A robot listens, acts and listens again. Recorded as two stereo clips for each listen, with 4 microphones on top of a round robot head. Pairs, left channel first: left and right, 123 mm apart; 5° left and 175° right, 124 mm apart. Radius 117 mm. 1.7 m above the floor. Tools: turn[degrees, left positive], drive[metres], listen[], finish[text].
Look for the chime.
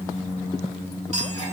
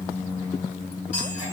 Thought: The chime: 60° right.
Action: turn[-60]
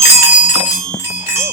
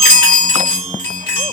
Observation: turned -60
Thought: The chime is now 20° right.
Action: turn[-20]
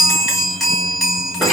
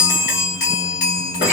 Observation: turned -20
Action: finish[Facing the chime.]